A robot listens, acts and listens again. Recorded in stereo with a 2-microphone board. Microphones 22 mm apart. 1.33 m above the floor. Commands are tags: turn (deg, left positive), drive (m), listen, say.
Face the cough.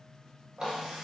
<listen/>
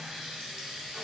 <listen/>
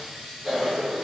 <turn deg="-25"/>
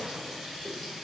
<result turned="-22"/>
<listen/>
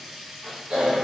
<turn deg="-130"/>
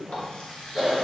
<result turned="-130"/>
<say>Found it: a cough, straight ahead, 1 to 2 m away.</say>